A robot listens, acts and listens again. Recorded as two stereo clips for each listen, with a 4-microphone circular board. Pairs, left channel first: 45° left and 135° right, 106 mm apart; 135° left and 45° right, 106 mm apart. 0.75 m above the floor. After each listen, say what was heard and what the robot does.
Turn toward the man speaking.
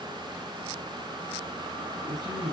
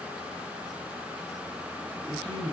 The man speaking: 90° right. Turn 90° right.
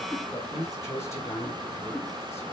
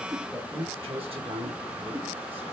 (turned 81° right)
The man speaking is now 20° right. Turn 20° right.
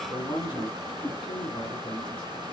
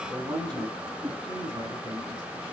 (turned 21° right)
Facing the man speaking.